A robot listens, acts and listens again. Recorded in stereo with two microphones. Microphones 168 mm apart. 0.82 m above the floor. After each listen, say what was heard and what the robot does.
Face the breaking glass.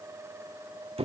Keep listening.
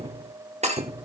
The breaking glass: about 45° right or 135° right. Turn 45° right.
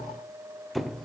Keep listening.
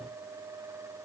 I heard breaking glass, but can't make it out now. It was about straight ahead or 90° right.